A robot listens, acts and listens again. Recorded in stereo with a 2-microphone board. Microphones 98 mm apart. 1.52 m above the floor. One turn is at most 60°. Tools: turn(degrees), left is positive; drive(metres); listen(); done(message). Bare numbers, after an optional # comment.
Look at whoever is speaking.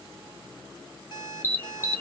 listen()
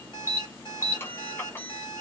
listen()
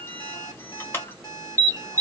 done("I can't make out anyone speaking to turn to.")